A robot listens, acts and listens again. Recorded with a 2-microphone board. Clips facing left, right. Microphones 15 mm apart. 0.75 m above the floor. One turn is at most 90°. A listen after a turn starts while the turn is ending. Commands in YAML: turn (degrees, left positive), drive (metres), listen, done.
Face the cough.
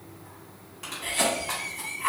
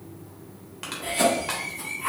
turn: 15
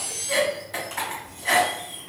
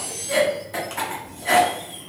done: "Facing the cough."